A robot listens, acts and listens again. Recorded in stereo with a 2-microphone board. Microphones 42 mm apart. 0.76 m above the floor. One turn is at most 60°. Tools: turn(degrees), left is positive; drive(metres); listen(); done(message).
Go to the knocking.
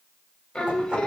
turn(degrees=-25)
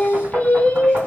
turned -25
turn(degrees=-60)
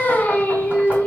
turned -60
turn(degrees=-60)
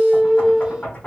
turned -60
turn(degrees=30)
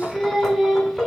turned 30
turn(degrees=10)
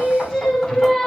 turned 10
drive(metres=1.0)
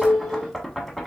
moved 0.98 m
drive(metres=1.0)
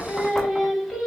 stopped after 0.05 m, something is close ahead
turn(degrees=10)
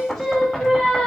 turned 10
done("Arrived at the knocking, straight ahead.")